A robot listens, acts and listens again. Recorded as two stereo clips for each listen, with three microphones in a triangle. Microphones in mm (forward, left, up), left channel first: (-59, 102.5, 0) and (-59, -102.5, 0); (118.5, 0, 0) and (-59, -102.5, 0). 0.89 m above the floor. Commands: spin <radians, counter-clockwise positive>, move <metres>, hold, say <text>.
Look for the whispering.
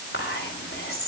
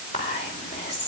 spin 1.57
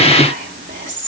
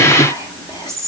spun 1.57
spin -0.70
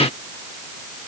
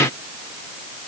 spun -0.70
spin -0.26
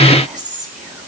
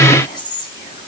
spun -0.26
say Found it: whispering, straight ahead.